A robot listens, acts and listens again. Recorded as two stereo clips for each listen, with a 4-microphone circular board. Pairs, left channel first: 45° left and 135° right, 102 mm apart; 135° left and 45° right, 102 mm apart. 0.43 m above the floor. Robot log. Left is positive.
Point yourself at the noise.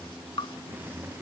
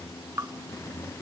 note: The dripping: 15° left.
cmd yaw +15
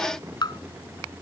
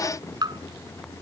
end: Found it: dripping, straight ahead.